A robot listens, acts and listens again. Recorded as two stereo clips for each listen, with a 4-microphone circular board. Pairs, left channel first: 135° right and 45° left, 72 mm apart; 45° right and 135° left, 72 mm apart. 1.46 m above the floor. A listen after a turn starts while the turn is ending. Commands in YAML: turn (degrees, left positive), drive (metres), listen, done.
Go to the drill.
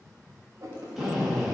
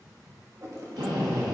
turn: 130
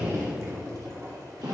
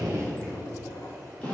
turn: 30
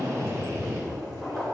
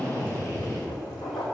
drive: 1.0
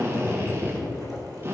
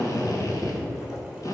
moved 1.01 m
turn: -10
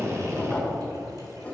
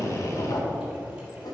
drive: 1.0
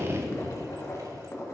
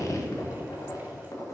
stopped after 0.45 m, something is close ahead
done: "Arrived at the drill, straight ahead."